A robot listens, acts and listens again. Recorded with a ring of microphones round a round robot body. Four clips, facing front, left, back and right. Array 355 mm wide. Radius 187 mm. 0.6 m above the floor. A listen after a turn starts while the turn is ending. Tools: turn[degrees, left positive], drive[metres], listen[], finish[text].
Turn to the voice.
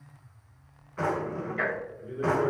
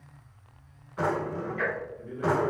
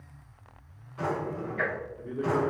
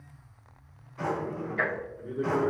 Thought: The man speaking: 125° right.
Action: turn[-125]
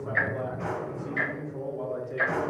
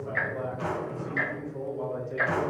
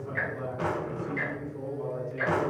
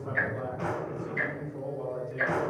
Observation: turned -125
Thought: The man speaking is now 35° left.
Action: turn[35]
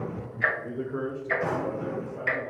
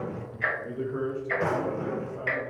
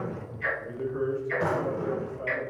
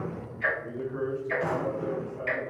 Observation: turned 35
Thought: The man speaking is now 25° left.
Action: turn[25]
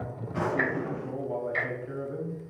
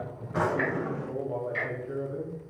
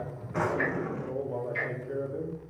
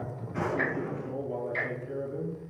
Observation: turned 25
Action: finish[Facing the man speaking.]